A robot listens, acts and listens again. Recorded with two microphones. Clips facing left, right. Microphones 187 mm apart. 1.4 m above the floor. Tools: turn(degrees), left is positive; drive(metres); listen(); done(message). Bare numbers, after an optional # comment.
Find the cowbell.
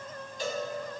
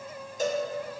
# The cowbell: about 45° right or 135° right.
turn(-45)
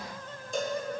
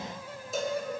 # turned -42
done("Found it: a cowbell, straight ahead, 1 to 2 m away.")